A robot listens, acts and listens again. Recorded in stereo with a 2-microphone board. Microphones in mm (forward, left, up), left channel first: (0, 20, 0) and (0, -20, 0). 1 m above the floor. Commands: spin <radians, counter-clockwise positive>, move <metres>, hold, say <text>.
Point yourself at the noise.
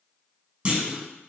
spin -0.52
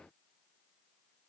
hold
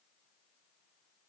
say I heard a clunk, but can't make it out now. It was about straight ahead or 120° right.